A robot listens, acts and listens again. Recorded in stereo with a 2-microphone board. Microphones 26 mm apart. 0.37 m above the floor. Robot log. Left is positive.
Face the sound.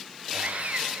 note: The sawing: about 60° right or 120° right.
cmd yaw -60
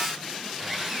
end: Facing the sawing, over 4 m away.